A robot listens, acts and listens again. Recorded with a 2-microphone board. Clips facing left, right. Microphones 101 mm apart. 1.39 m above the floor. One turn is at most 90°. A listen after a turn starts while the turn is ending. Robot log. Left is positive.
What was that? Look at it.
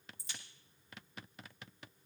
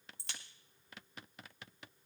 note: The crack: about 65° right or 115° right.
cmd yaw -65
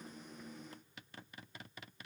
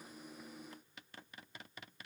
cmd idle
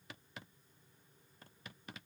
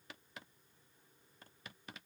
end: I heard a crack, but can't make it out now. It was about straight ahead or 50° right.